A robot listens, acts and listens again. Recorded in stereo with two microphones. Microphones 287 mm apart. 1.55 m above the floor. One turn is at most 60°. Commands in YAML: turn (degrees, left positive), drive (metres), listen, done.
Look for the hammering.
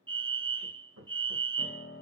turn: -55
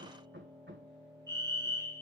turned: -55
turn: -45
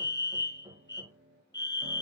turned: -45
turn: -15
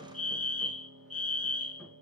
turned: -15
listen: true
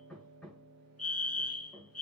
done: "Found it: hammering, straight ahead."